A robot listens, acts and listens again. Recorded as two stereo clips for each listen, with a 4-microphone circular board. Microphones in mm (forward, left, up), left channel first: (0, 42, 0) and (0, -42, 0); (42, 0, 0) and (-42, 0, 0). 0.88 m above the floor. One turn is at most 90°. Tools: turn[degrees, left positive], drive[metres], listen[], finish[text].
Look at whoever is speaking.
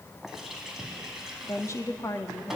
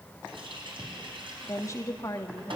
Thought: The woman speaking: 45° left.
Action: turn[45]
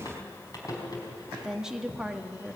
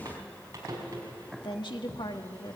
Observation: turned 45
Thought: The woman speaking is now 10° right.
Action: turn[-10]
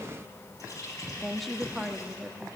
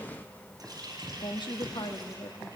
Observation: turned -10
Action: finish[Facing the woman speaking, 1 to 2 m away.]